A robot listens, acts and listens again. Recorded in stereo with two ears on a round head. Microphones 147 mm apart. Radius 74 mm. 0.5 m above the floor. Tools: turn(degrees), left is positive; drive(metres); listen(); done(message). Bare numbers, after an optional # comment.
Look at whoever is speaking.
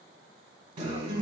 listen()
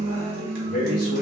# The man speaking: about 60° left or 120° left.
turn(60)
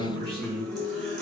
# So it is at 30° left.
turn(30)
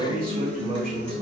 done("Facing the man speaking.")